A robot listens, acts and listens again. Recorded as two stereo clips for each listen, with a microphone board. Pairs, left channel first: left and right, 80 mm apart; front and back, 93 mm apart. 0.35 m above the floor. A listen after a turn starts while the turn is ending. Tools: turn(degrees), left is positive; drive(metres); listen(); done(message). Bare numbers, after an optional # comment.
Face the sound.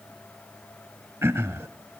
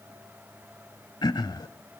# The throat clearing: 35° right.
turn(-35)
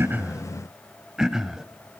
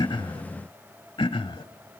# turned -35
done("Found it: throat clearing, straight ahead.")